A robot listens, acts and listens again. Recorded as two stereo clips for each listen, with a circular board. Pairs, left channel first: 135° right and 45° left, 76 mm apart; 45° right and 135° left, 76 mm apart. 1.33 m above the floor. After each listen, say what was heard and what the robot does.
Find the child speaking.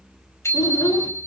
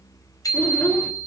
The child speaking: 115° right. Turn 115° right.
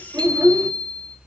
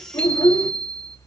The child speaking is now 10° right. Turn 10° right.
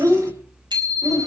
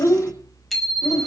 Found it: a child speaking, straight ahead.